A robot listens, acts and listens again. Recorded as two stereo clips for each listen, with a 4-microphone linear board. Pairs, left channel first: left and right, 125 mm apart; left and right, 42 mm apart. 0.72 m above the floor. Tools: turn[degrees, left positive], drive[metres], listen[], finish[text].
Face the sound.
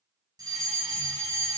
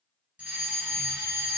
Thought: The fire alarm: about 30° right or 150° right.
Action: turn[-30]
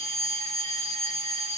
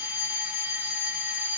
Thought: So it is at 120° right.
Action: turn[-120]
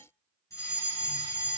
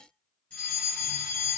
Thought: The fire alarm is now 25° left.
Action: turn[25]
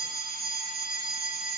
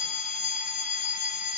Action: finish[Found it: a fire alarm, straight ahead.]